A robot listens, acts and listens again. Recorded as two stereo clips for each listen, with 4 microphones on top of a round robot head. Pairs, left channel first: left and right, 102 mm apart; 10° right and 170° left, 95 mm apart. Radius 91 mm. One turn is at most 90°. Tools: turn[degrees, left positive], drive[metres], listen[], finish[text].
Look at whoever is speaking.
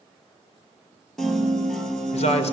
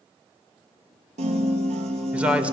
Thought: The man speaking: 95° left.
Action: turn[90]
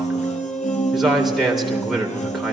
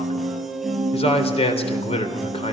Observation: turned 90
Action: finish[Found it: a man speaking, straight ahead, 2 to 4 m away.]